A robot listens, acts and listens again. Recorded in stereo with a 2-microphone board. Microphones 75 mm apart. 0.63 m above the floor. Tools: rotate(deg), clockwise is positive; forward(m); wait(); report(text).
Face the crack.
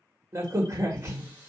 rotate(40)
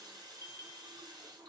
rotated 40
wait()
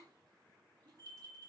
report("I heard a crack, but can't make it out now. It was about straight ahead or 100° right.")